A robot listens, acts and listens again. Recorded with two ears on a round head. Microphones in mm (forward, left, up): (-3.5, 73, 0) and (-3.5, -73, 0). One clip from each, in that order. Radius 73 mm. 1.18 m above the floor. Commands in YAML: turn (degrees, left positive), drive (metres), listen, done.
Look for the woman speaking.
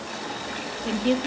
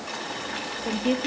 turn: 35
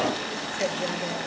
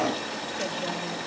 listen: true
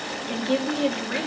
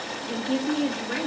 turn: 115
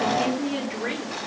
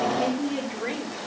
turn: 15
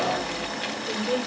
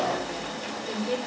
done: "Found it: a woman speaking, straight ahead."